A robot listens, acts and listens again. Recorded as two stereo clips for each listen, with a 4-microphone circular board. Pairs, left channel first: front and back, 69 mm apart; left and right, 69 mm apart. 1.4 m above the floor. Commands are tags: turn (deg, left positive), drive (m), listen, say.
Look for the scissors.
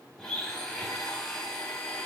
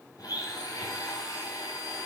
<listen/>
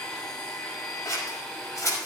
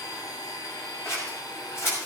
<turn deg="40"/>
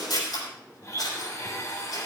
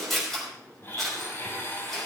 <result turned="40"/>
<say>Found it: scissors, straight ahead.</say>